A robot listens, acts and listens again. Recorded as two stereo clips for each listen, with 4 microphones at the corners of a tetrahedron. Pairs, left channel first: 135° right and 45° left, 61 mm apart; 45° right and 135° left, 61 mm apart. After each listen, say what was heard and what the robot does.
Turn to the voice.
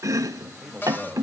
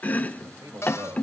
The man speaking: 125° left. Turn 125° left.
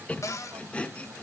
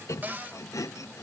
Keep listening.
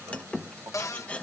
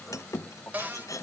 The man speaking is now 10° left. Turn 10° left.
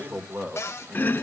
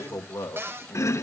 The man speaking is now 25° right. Turn 25° right.
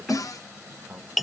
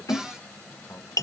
Facing the man speaking, 2 to 4 m away.